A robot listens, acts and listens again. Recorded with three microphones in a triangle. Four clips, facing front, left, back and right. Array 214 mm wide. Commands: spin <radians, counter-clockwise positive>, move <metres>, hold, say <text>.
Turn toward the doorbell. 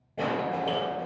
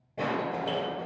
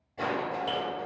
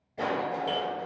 spin -0.52
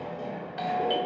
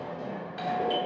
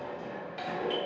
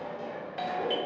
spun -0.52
say Facing the doorbell, 2 to 4 m away.